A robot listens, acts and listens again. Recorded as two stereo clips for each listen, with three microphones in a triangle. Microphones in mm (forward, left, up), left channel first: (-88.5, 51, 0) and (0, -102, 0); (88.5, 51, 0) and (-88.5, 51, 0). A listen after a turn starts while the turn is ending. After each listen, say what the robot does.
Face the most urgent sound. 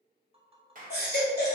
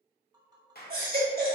Turn 145° left.
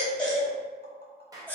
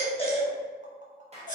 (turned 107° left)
Turn 40° left.
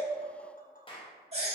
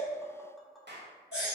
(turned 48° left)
Turn 10° right.
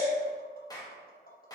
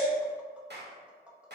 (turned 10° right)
Keep listening.
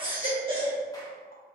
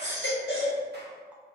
Facing the baby crying, 1 to 2 m away.